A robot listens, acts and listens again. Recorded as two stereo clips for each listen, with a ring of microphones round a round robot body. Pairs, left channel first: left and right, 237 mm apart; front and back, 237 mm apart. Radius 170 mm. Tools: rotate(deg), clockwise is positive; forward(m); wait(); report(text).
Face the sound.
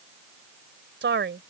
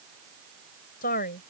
rotate(60)
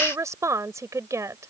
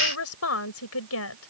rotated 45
rotate(15)
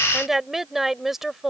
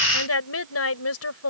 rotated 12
report("Facing the woman speaking.")